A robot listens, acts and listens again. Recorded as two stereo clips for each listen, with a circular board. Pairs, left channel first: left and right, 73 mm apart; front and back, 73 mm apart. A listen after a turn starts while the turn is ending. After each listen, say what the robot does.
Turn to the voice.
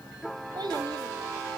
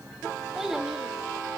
Turn 95° right.
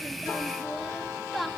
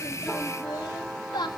Found it: a child speaking, straight ahead, 2 to 4 m away.